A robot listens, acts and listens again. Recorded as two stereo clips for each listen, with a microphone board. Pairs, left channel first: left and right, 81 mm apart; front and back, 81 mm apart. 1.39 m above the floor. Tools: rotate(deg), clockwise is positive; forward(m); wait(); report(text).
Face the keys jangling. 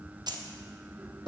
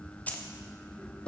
rotate(70)
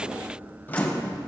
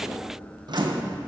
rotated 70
wait()
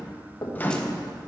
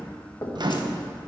wait()
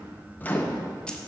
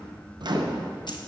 report("I heard keys jangling from this way, but can't make it out now.")